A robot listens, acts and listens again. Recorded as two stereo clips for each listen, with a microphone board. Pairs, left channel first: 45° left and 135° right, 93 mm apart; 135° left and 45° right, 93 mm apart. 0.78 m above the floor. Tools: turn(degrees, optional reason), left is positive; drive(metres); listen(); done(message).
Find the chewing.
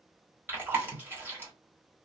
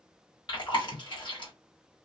turn(degrees=160, reason="The chewing: 160° left.")
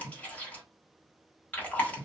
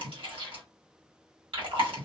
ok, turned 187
turn(degrees=-25, reason="The chewing is now 25° right.")
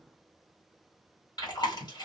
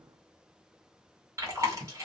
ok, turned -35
turn(degrees=10, reason="The chewing is now 10° left.")
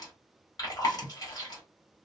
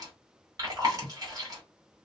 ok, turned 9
done("Facing the chewing.")